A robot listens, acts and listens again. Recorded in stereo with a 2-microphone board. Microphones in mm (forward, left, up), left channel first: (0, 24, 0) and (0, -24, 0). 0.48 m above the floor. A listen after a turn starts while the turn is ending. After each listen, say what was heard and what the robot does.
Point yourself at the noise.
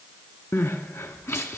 The crying: about 75° left or 105° left. Turn 75° left.
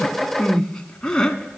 So it is at 15° left. Turn 15° left.
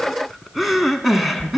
Facing the crying.